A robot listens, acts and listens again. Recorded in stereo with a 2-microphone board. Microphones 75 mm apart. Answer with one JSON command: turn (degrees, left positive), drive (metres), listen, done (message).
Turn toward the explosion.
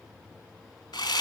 {"listen": true}
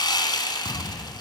{"turn": 70}
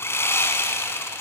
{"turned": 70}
{"listen": true}
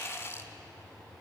{"done": "I heard an explosion, but can't make it out now. It was about straight ahead or 40° left."}